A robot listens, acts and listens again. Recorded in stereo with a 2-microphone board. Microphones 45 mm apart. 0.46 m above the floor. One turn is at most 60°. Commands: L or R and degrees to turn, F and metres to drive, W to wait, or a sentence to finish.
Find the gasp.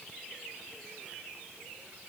W
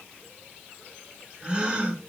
R25
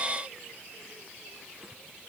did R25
W
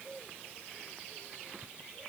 I heard a gasp, but can't make it out now. It was about straight ahead or 130° right.